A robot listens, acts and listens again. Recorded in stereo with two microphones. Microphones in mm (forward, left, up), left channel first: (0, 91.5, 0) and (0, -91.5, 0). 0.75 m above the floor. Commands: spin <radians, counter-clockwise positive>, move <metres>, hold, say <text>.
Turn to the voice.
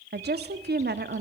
spin -1.13
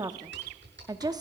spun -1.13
spin -0.44
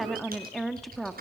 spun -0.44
say Facing the woman speaking.